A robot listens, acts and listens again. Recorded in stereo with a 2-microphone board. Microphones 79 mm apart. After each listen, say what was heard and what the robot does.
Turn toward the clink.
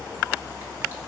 Keep listening.
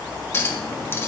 The clink: about 30° left or 150° left. Turn 30° left.
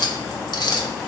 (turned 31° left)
So it is at 120° left. Turn 120° left.
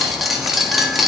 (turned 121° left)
Facing the clink, 1 to 2 m away.